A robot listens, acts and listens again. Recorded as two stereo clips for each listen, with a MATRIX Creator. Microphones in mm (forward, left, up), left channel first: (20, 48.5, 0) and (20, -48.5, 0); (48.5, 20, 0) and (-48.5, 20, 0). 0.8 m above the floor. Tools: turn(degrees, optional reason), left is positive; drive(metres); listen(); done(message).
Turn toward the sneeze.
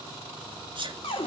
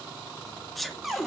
turn(degrees=-90, reason="The sneeze: 90° right.")
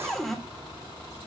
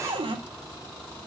done("Facing where the sneeze came from. I can't hear it now.")